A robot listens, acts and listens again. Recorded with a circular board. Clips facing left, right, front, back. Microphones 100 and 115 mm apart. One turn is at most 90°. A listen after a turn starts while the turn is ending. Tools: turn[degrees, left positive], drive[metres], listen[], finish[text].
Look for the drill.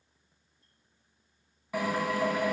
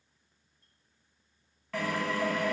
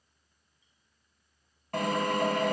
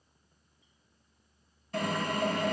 Thought: The drill: 15° left.
Action: turn[15]
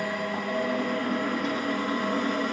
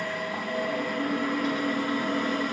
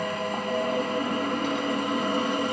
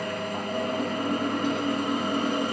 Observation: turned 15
Action: finish[Found it: a drill, straight ahead.]